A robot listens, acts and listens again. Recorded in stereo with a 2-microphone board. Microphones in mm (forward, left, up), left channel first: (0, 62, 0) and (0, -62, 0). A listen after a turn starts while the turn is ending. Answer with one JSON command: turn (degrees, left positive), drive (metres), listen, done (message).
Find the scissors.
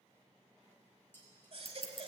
{"turn": 50}
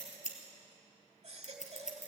{"turn": 80}
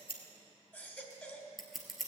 {"done": "Found it: scissors, straight ahead, 1 to 2 m away."}